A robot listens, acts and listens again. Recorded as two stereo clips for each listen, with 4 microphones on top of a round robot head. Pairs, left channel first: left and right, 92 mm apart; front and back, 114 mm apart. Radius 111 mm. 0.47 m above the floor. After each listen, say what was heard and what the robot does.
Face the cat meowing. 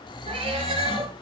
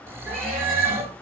The cat meowing: 90° right. Turn 90° right.
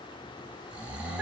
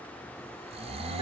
Keep listening.
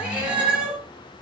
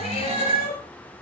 The cat meowing is now 10° right. Turn 10° right.
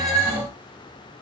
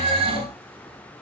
Facing the cat meowing, over 4 m away.